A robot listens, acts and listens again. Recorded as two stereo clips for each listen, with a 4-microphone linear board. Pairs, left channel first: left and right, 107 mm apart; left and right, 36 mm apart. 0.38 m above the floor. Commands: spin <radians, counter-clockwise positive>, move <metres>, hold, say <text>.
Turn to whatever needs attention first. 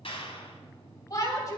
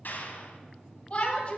spin 0.61
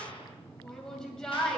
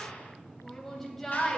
spin 0.17
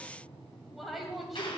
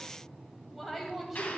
say Facing the shout, 2 to 4 m away.